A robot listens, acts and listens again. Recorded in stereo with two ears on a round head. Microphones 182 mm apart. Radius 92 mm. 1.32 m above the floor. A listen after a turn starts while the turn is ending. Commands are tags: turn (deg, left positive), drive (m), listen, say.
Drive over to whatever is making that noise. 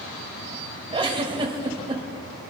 <turn deg="-25"/>
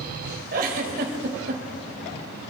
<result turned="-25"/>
<turn deg="-125"/>
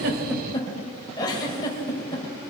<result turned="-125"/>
<turn deg="20"/>
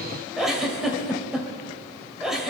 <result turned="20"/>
<drive m="1.0"/>
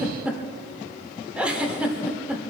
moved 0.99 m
<drive m="1.0"/>
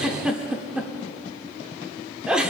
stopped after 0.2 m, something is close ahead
<say>I am next to the giggle.</say>